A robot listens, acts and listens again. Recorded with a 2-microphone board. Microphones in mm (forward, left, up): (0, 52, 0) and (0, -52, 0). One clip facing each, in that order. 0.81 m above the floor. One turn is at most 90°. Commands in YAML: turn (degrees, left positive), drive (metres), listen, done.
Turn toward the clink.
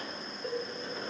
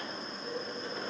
listen: true
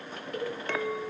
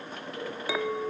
turn: -30
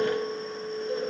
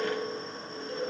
turn: 25
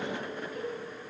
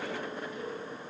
listen: true
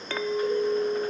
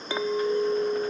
turn: -15
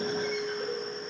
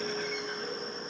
done: "Facing the clink."